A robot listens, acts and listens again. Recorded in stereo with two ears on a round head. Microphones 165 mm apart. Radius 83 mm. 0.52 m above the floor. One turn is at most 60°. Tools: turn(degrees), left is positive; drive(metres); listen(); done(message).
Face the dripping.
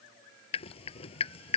turn(degrees=35)
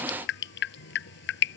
turn(degrees=60)
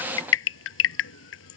turn(degrees=60)
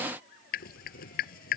turn(degrees=50)
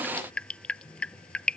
done("Facing the dripping.")